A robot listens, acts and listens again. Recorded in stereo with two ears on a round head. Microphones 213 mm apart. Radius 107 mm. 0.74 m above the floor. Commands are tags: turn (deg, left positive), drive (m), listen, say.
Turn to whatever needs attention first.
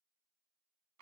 <listen/>
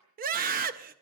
<turn deg="-35"/>
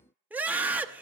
<turn deg="-10"/>
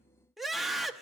<say>Facing the scream, under 1 m away.</say>